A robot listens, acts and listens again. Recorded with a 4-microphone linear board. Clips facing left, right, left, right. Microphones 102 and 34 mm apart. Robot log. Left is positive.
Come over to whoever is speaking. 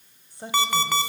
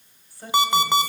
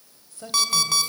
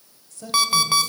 note: The woman speaking: about 25° left or 155° left.
cmd yaw +25
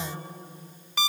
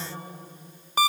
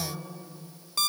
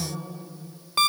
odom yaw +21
note: So it is at 135° left.
cmd yaw +135
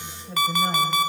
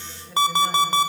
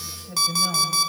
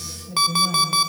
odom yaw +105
note: The woman speaking is now 30° left.
cmd yaw +30
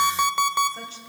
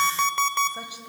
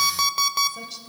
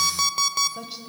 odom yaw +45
note: The woman speaking is now 15° right.
cmd yaw -15
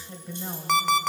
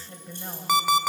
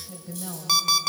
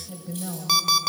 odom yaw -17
cmd fwd 1.0
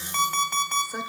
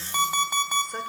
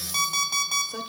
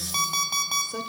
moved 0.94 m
cmd idle
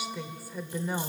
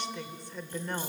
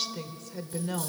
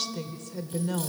cmd fwd 1.0
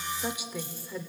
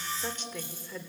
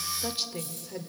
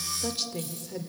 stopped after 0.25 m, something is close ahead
note: The woman speaking is now 10° left.
cmd yaw +10
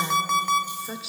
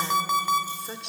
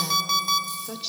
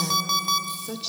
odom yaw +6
end: I am next to the woman speaking.